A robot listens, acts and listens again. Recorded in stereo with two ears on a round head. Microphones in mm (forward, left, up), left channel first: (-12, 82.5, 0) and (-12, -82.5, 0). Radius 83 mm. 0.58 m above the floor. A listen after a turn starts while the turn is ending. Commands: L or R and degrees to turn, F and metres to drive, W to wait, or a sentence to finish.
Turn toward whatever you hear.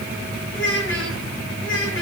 L90
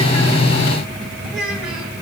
Facing the child speaking, over 4 m away.